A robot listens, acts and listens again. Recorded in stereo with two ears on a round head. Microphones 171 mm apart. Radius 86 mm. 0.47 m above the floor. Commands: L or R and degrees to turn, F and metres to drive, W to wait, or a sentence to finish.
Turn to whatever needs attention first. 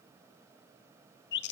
W
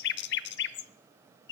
W
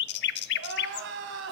R70
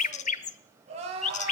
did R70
R35
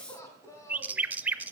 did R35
L15
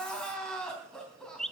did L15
Found it: crying, straight ahead.